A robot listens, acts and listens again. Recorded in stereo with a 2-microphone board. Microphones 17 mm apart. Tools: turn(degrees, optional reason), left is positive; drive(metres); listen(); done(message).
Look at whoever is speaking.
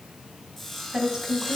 turn(degrees=-55, reason="The woman speaking: about 55° right or 125° right.")
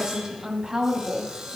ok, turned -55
turn(degrees=-60, reason="So it is at 60° right.")
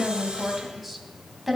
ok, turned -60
done("Found it: a woman speaking, straight ahead.")